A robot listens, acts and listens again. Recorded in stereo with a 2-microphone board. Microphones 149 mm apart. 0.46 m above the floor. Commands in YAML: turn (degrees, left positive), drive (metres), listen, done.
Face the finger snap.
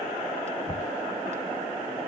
listen: true
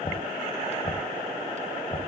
listen: true
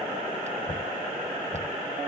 done: "I can't make out a finger snap, only knocking."